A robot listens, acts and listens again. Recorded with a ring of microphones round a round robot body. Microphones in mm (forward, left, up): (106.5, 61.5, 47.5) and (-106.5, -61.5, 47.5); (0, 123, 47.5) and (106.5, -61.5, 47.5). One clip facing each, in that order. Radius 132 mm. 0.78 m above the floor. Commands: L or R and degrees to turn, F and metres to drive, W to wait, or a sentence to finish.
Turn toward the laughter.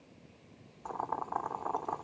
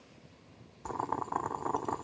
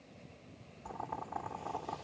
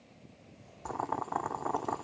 W
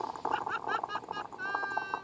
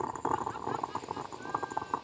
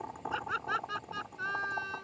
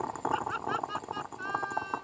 L50
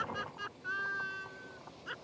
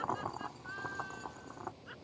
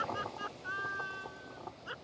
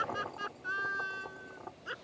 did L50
Found it: laughter, straight ahead.